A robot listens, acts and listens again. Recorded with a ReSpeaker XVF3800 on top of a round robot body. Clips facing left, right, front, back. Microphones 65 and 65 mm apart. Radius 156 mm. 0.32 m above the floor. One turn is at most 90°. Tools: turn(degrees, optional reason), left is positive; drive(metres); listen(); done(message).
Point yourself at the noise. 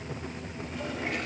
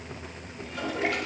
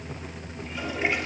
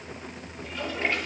turn(degrees=-75, reason="The toilet flushing: 75° right.")
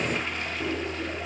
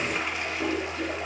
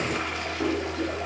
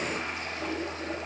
turn(degrees=-10, reason="The toilet flushing is now 10° right.")
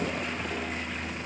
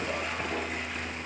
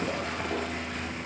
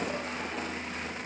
listen()
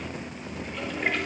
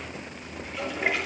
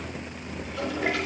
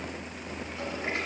done("Facing the toilet flushing, over 4 m away.")